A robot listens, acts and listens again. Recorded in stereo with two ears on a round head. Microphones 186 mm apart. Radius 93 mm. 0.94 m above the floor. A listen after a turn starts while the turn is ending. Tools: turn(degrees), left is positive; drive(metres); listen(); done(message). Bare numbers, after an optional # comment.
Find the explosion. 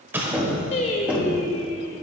turn(-30)
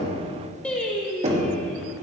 listen()
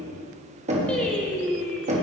done("I heard an explosion, but can't make it out now. It was about 20° left or 140° right.")